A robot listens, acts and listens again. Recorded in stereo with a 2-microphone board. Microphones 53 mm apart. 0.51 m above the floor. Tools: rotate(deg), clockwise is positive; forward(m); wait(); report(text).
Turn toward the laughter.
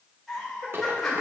rotate(-30)
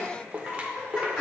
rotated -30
rotate(-30)
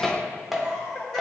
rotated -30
rotate(-30)
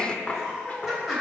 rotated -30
rotate(30)
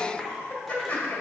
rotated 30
rotate(-30)
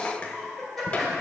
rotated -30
report("Facing the laughter, 1 to 2 m away.")